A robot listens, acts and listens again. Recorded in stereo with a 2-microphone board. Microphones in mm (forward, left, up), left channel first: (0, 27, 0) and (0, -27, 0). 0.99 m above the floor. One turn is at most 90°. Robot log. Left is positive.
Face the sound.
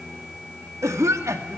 note: The cough: about 65° right or 115° right.
cmd yaw -65
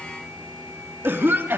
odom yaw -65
note: So it is at 45° right.
cmd yaw -45
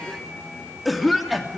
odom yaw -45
end: Facing the cough, 2 to 4 m away.